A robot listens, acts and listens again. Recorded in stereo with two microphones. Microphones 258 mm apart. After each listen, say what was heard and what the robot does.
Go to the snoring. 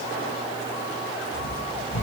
The snoring: about 50° left or 130° left. Turn 50° left.
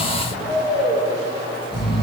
Drive 1.0 m forward.
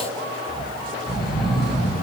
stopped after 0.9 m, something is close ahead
I am next to the snoring.